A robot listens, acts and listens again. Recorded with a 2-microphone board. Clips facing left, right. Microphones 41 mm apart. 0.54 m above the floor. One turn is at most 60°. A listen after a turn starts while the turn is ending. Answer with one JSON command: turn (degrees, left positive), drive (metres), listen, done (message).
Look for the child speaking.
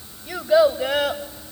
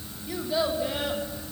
{"turn": 60}
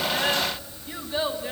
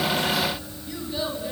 {"turn": 30}
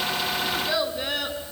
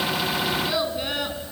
{"done": "Facing the child speaking, over 4 m away."}